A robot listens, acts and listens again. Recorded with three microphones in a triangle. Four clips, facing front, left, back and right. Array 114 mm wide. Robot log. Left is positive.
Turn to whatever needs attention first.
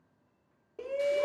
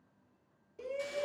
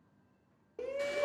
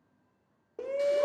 note: The shout: 90° right.
cmd yaw -90
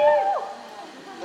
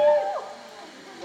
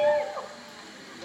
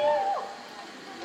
end: Found it: a shout, straight ahead, 1 to 2 m away.